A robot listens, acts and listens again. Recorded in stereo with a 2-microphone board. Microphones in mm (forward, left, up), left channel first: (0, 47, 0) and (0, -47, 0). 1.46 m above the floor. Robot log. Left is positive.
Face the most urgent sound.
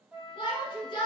note: The shout: about 55° left or 125° left.
cmd yaw +55
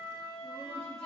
cmd idle
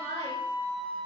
note: So it is at 70° left.
cmd yaw +70
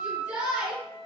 note: The shout is now 15° right.
cmd yaw -15
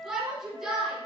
end: Facing the shout.